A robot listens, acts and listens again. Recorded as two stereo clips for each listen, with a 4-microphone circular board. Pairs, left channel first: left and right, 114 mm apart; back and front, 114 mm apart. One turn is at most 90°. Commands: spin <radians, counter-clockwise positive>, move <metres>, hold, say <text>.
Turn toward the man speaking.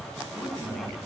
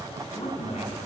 spin 1.57
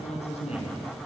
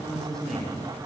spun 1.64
spin 1.57
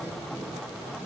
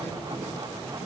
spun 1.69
hold
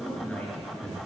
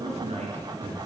spin 0.17
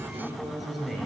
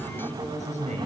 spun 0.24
say Found it: a man speaking, straight ahead, over 4 m away.